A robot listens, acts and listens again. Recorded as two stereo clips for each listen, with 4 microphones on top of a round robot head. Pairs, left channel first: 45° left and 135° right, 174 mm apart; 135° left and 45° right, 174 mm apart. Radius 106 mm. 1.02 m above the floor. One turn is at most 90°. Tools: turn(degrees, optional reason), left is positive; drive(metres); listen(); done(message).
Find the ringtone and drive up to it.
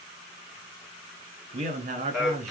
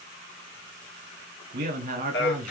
listen()
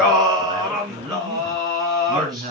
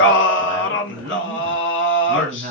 listen()
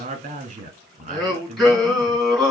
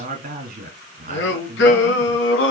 done("I can't make out a ringtone, only a man speaking and singing.")